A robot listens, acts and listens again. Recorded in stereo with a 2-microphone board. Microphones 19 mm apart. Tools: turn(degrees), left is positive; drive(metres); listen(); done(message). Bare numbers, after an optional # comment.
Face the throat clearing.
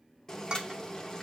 listen()
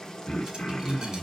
# The throat clearing: about 65° left or 115° left.
turn(65)
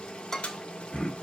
# So it is at 50° left.
turn(50)
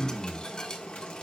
# The throat clearing is now 30° left.
turn(30)
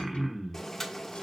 # The throat clearing is now 15° right.
turn(-15)
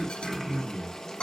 done("Found it: throat clearing, straight ahead, 1 to 2 m away.")